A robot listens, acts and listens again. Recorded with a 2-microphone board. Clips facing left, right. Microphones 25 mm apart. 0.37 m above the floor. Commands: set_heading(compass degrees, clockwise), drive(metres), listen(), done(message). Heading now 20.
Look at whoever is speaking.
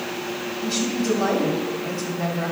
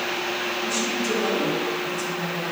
set_heading(325)
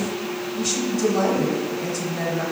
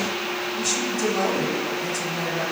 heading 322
set_heading(312)
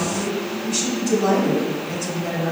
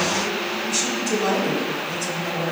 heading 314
done("Found it: a woman speaking, straight ahead, 1 to 2 m away.")